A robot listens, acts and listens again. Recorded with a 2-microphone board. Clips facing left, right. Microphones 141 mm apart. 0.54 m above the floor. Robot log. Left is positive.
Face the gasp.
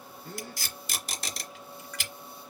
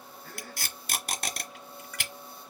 note: The gasp: about 25° left or 155° left.
cmd yaw +25
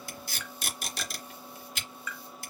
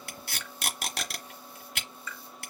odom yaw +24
cmd idle
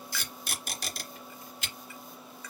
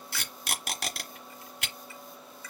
end: I heard a gasp, but can't make it out now. It was about straight ahead or 135° left.